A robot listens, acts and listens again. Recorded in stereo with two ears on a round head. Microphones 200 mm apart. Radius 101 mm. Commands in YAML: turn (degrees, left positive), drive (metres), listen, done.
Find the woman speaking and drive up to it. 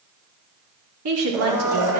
turn: -90
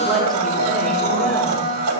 listen: true
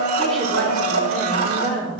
drive: 1.0
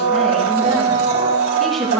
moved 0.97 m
drive: 1.0
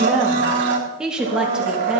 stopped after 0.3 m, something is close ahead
done: "I am next to the woman speaking."